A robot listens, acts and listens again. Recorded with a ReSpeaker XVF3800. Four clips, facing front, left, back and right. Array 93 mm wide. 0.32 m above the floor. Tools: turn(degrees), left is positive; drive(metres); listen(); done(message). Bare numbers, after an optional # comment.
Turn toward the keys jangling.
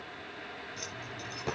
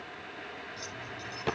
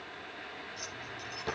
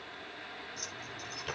# The keys jangling: 10° right.
turn(-10)
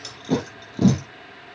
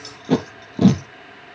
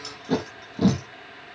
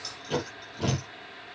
done("Found it: keys jangling, straight ahead, over 4 m away.")